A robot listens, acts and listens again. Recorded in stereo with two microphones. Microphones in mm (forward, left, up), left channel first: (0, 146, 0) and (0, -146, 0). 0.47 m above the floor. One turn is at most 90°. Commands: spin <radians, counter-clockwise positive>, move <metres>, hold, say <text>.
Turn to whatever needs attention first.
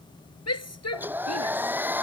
spin 1.13
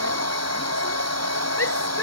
spin 0.87
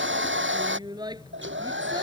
spin -0.26
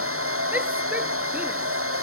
hold
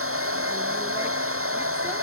hold
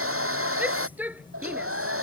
say Found it: a shout, straight ahead.